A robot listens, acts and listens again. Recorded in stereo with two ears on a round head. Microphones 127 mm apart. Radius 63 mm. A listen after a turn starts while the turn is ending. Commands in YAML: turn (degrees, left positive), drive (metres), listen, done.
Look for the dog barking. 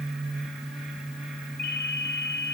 listen: true
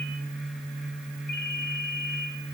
listen: true
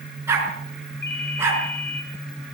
turn: -15
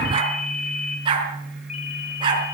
turn: -145
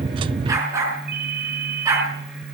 turn: -20
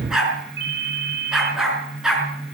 done: "Found it: a dog barking, straight ahead."